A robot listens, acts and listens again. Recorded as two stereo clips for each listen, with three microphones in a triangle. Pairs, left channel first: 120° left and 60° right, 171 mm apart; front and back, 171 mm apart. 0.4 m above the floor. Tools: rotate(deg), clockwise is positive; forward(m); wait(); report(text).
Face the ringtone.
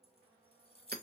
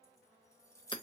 wait()
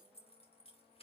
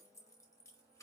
wait()
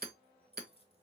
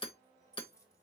report("I can't make out a ringtone, only hammering and keys jangling.")